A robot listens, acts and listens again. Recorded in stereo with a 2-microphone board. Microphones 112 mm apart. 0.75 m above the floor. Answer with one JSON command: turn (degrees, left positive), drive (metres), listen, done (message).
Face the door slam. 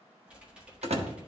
{"turn": -70}
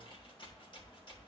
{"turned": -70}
{"listen": true}
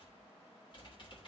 {"done": "I heard a door slam, but can't make it out now. It was about straight ahead or 40° right."}